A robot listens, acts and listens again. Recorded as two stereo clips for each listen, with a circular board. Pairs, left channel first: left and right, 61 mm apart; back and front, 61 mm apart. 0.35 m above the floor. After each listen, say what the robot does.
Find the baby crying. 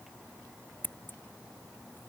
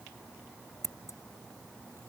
Keep listening.
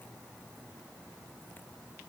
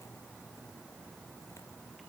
Keep listening.
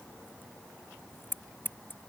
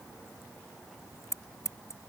I can't make out a baby crying to turn to.